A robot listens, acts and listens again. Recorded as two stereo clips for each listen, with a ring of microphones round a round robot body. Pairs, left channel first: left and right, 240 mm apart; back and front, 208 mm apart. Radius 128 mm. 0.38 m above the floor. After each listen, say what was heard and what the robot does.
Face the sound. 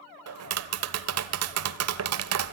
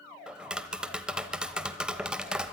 The tapping: 85° right. Turn 85° right.
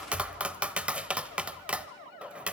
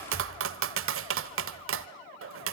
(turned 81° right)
Facing the tapping, under 1 m away.